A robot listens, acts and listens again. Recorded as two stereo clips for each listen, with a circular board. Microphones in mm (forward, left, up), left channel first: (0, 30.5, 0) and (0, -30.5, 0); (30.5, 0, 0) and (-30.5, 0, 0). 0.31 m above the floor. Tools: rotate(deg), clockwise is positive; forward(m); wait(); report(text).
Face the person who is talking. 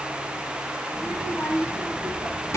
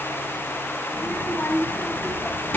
rotate(-55)
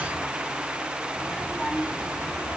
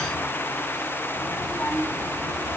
rotate(-20)
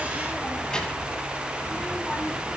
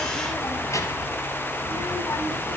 rotate(-20)
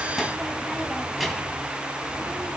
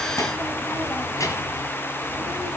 report("Found it: a child speaking, straight ahead, 2 to 4 m away.")